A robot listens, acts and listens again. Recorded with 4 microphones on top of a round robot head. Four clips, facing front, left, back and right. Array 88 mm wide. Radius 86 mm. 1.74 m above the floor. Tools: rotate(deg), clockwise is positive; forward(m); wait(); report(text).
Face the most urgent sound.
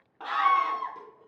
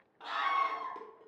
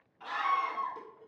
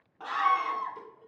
rotate(25)
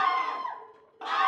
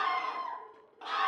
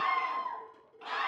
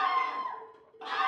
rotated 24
report("Facing the scream, 1 to 2 m away.")